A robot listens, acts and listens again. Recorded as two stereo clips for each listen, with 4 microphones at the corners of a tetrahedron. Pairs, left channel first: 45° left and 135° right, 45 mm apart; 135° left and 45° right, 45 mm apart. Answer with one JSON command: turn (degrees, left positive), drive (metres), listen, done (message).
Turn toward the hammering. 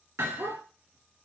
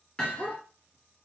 {"turn": -140}
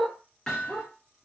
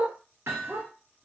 {"turn": -30}
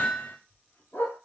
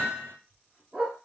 {"done": "Facing the hammering, 2 to 4 m away."}